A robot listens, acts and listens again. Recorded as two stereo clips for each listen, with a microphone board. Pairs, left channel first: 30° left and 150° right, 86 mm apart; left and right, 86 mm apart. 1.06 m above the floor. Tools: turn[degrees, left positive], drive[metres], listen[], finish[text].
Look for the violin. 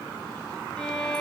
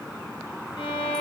Thought: The violin: 110° left.
Action: turn[110]
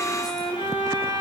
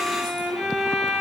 Action: finish[Found it: a violin, straight ahead.]